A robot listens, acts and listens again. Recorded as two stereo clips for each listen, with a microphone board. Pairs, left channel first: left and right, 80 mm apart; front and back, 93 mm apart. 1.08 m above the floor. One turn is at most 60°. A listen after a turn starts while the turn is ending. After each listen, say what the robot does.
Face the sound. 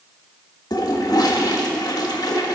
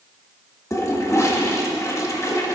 Turn 55° left.
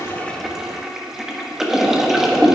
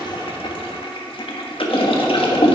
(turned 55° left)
Facing the toilet flushing, 1 to 2 m away.